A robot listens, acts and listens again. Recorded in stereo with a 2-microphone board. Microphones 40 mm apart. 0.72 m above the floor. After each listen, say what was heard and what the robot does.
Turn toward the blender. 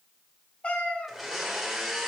Turn 30° right.
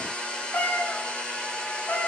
So it is at 25° left. Turn 25° left.
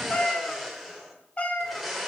Facing the blender, 1 to 2 m away.